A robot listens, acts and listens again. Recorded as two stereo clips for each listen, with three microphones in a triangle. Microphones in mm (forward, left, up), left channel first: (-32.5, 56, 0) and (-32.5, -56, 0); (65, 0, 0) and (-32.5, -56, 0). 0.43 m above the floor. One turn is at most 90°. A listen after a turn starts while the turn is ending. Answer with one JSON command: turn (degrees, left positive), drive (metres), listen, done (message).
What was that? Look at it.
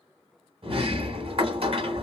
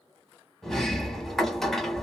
{"turn": -55}
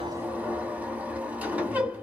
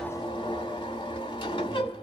{"turn": -15}
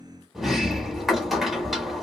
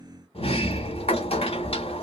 {"done": "Found it: a sliding door, straight ahead."}